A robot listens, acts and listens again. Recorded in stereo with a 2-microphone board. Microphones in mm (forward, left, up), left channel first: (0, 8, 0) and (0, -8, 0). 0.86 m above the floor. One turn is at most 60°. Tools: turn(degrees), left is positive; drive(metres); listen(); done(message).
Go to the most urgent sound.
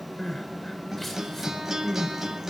turn(degrees=30)
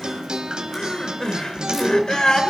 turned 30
turn(degrees=60)
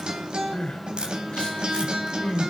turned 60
turn(degrees=60)
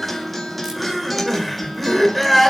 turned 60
drive(metres=1.0)
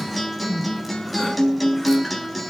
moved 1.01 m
turn(degrees=10)
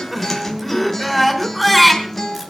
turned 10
drive(metres=1.0)
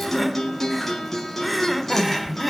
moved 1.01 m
drive(metres=1.0)
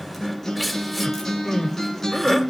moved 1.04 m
drive(metres=1.0)
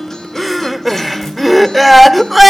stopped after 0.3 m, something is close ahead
done("I am next to the crying.")